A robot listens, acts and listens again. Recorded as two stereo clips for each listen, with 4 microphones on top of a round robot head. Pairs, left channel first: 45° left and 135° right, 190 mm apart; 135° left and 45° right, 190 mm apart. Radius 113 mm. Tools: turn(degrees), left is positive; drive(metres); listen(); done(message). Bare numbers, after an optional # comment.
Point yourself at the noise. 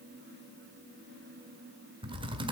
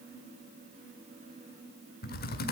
# The typing on a keyboard: 165° left.
turn(165)
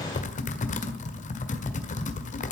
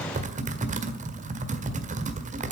done("Found it: typing on a keyboard, straight ahead, 1 to 2 m away.")